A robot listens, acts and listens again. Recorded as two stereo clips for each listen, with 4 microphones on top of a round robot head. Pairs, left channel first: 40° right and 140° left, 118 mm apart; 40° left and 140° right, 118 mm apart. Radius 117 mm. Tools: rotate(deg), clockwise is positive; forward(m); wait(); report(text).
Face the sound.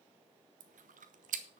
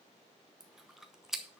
rotate(-130)
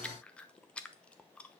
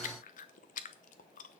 rotate(-45)
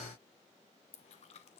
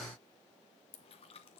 wait()
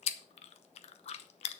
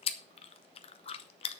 report("Facing the chewing.")